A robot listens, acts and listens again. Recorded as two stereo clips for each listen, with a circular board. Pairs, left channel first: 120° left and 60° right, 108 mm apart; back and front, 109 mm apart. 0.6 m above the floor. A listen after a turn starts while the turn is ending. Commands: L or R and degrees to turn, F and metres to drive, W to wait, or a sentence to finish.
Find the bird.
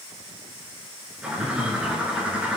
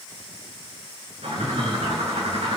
L20
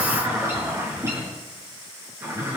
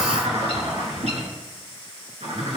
Found it: a bird, straight ahead, over 4 m away.